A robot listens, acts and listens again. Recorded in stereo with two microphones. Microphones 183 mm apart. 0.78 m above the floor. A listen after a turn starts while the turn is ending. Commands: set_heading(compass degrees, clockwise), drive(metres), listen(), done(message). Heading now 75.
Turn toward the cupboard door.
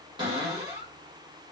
set_heading(100)
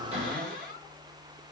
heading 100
set_heading(230)
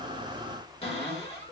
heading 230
set_heading(195)
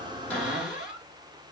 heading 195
done("Found it: a cupboard door, straight ahead, 1 to 2 m away.")